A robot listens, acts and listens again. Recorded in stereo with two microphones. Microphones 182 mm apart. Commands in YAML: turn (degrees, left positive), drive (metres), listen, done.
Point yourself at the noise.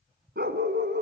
turn: -90
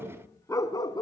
turn: 25
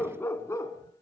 turn: 20
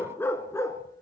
turn: 20
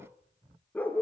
turn: 10
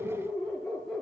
done: "Facing the dog barking, 2 to 4 m away."